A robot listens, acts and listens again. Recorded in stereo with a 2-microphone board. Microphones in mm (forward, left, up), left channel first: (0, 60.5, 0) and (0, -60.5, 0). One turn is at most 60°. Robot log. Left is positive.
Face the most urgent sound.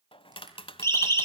note: The siren: about 25° left or 155° left.
cmd yaw +25
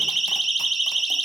end: Found it: a siren, straight ahead.